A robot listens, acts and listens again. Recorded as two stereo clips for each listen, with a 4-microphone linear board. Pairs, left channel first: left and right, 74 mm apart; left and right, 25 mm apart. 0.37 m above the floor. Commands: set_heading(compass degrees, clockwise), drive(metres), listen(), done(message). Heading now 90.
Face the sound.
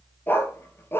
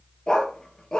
set_heading(60)
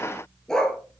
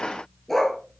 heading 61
set_heading(51)
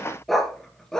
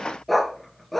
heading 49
set_heading(39)
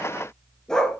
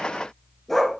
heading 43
set_heading(33)
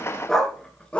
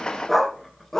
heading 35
set_heading(20)
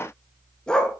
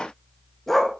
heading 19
set_heading(4)
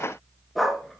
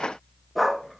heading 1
done("Found it: a dog barking, straight ahead, 1 to 2 m away.")